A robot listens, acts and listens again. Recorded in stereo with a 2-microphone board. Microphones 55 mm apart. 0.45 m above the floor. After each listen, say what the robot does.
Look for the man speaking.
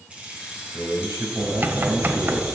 Turn 75° right.
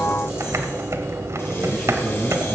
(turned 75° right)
Turn 20° right.
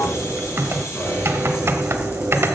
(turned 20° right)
Keep listening.
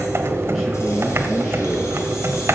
Keep listening.
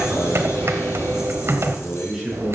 Found it: a man speaking, straight ahead, over 4 m away.